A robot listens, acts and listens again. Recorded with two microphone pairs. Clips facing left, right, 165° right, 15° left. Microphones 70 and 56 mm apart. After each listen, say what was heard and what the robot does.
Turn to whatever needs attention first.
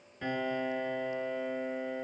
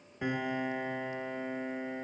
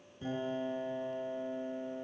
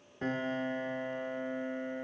Keep listening.
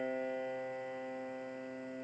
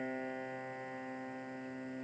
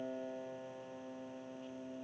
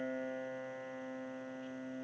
Keep listening.
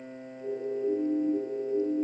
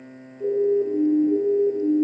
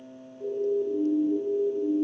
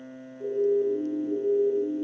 The siren: 65° right. Turn 65° right.
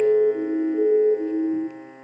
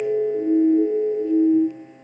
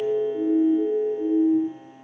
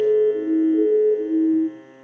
The siren is now 25° left. Turn 25° left.
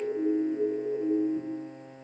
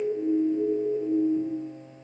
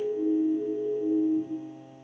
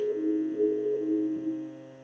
The siren is now 10° left. Turn 10° left.
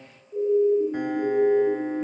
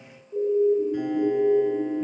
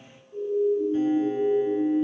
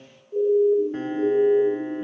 Found it: a siren, straight ahead, over 4 m away.